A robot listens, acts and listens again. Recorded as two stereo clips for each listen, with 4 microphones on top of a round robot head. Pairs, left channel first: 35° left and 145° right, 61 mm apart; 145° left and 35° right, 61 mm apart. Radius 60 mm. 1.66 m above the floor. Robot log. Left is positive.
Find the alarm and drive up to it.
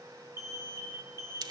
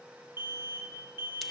note: The alarm: 95° right.
cmd yaw -95
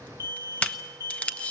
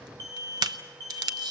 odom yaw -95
cmd fwd 1.0
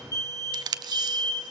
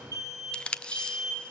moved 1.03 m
cmd fwd 1.0
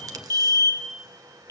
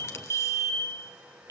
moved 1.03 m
cmd fwd 1.0
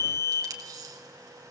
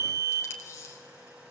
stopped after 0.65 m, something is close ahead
end: Arrived at the alarm, straight ahead.